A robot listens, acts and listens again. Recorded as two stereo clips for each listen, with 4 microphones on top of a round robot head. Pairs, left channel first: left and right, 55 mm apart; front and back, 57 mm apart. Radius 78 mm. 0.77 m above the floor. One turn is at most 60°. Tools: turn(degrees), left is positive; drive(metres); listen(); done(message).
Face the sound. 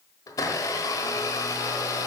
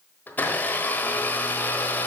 turn(degrees=60)
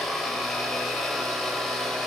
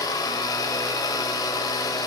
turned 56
done("Facing the blender.")